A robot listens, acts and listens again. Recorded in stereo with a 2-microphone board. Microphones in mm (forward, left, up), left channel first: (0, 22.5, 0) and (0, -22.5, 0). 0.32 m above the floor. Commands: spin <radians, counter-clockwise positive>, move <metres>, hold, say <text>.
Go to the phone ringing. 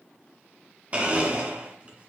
hold
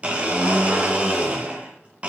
hold
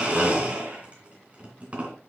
say I can't make out a phone ringing to turn to.